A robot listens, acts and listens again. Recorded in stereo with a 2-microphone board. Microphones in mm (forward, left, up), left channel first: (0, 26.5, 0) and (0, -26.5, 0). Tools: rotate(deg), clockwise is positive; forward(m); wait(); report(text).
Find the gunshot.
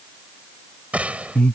rotate(25)
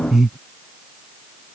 wait()
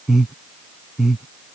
report("I heard a gunshot, but can't make it out now. It was about straight ahead or 130° right.")